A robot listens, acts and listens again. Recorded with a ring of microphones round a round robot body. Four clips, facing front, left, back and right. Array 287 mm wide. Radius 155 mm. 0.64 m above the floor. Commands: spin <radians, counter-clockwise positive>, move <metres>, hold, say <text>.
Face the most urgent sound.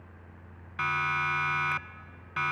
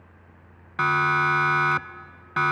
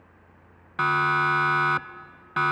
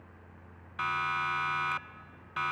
spin 2.27
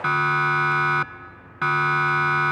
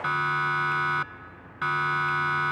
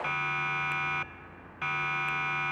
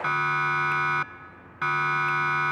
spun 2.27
say Found it: a siren, straight ahead.